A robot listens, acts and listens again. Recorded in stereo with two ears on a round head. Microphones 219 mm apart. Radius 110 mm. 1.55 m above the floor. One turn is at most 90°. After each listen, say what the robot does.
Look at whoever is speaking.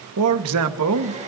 Turn 70° right.
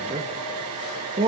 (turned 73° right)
Turn 25° right.
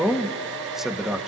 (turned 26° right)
Facing the man speaking, 1 to 2 m away.